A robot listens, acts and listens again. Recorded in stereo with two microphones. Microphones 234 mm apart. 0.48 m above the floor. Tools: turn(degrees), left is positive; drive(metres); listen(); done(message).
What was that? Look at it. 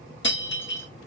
turn(degrees=50)
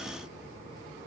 listen()
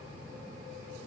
done("I heard breaking glass, but can't make it out now. It was about straight ahead or 80° left.")